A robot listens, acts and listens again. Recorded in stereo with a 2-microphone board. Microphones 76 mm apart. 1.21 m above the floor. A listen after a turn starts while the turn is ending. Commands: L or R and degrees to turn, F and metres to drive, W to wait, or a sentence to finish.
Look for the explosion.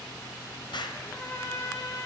L75
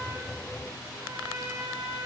W
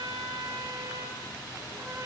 I heard an explosion, but can't make it out now. It was about straight ahead or 30° left.